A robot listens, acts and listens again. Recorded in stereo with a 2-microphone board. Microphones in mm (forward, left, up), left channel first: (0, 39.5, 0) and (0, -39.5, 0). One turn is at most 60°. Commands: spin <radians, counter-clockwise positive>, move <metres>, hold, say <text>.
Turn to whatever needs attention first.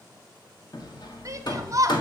spin -0.79
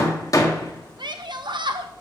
spin -1.05
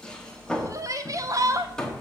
spin -0.79
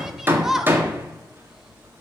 say Facing the shout.